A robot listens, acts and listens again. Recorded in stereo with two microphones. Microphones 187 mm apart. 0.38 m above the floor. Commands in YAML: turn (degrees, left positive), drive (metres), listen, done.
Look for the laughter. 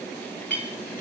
listen: true
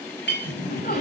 turn: 55
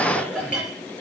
done: "Facing the laughter, over 4 m away."